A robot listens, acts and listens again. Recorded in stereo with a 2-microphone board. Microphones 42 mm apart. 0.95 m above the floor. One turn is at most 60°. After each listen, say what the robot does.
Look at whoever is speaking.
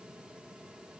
Keep listening.
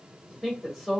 Turn 30° left.
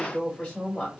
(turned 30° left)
Turn 60° left.
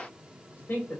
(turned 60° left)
Turn 60° left.
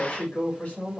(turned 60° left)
Turn 35° left.
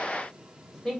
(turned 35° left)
Found it: a woman speaking, straight ahead, 1 to 2 m away.